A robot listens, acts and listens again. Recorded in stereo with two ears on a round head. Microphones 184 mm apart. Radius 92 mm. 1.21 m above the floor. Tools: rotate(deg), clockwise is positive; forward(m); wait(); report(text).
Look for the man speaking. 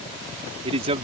rotate(30)
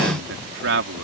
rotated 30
rotate(115)
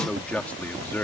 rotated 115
rotate(-10)
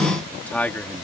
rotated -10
rotate(-10)
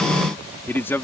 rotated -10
rotate(-10)
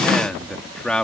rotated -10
report("Facing the man speaking.")